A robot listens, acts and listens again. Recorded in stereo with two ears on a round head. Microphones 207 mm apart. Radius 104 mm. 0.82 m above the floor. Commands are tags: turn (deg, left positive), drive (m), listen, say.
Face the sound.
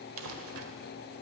<turn deg="-65"/>
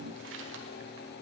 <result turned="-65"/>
<turn deg="-55"/>
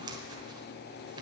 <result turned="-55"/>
<turn deg="-20"/>
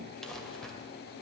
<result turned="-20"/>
<say>Facing the crumpling, 1 to 2 m away.</say>